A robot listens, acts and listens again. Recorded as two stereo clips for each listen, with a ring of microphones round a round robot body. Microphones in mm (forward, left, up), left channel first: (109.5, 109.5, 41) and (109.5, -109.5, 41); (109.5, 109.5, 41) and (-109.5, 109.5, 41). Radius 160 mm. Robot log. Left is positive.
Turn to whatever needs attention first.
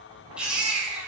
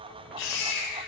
end: Facing the baby crying, over 4 m away.